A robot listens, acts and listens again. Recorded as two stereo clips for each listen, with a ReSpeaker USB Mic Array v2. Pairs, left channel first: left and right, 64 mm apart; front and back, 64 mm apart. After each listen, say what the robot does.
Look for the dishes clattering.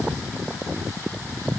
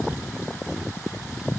Keep listening.
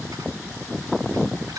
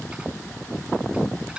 Keep listening.
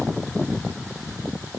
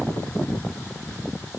I can't make out dishes clattering to turn to.